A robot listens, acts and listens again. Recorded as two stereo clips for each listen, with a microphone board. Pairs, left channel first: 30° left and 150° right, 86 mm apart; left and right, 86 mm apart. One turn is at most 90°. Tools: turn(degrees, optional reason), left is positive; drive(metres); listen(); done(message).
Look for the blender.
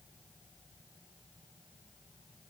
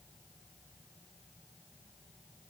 listen()
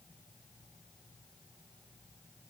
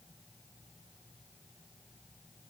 listen()
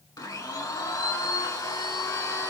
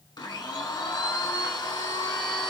turn(degrees=70, reason="The blender: 70° left.")
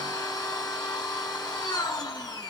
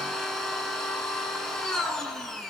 done("Facing the blender.")